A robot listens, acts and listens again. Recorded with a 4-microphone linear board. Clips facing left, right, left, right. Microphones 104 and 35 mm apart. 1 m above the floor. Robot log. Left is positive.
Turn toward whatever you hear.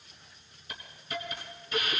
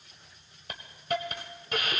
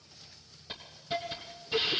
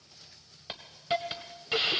note: The hiss: about 60° right or 120° right.
cmd yaw -60
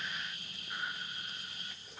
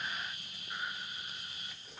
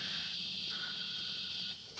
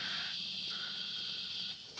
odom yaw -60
end: Facing the hiss.